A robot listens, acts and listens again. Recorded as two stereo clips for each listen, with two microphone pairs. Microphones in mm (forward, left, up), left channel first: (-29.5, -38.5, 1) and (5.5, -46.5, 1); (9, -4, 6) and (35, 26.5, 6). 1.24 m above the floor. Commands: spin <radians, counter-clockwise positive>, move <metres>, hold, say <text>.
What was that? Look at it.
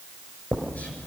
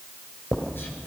spin -2.62
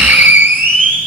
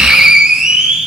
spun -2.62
spin -0.35
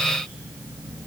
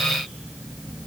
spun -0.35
hold
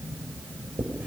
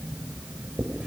say Facing the writing, over 4 m away.